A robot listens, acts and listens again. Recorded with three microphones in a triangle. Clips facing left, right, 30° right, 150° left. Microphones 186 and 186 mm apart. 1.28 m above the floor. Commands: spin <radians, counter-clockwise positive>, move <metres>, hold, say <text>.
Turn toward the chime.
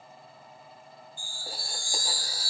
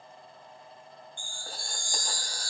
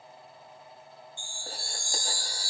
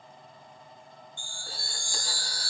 spin 3.05
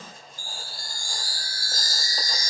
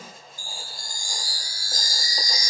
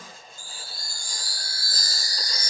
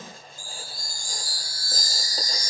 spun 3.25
spin -0.26
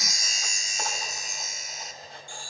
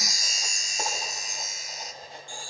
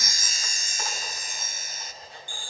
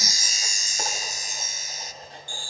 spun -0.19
say Facing the chime.